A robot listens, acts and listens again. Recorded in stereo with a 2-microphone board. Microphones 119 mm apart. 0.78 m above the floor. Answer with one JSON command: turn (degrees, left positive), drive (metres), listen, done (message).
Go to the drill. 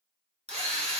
{"turn": -60}
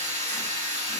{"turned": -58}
{"turn": -65}
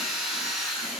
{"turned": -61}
{"drive": 1.0}
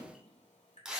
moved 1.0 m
{"drive": 1.0}
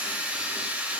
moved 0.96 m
{"turn": -10}
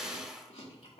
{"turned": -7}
{"drive": 1.0}
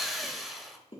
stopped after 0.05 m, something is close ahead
{"done": "Arrived at the drill, straight ahead."}